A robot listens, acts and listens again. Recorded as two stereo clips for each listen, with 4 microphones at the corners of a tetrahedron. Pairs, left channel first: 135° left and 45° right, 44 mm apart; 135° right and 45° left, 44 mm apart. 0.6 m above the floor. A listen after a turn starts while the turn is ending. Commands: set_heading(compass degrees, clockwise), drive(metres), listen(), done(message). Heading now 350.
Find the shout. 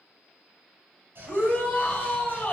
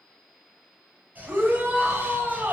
set_heading(280)
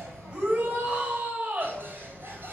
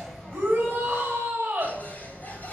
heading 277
done("Facing the shout.")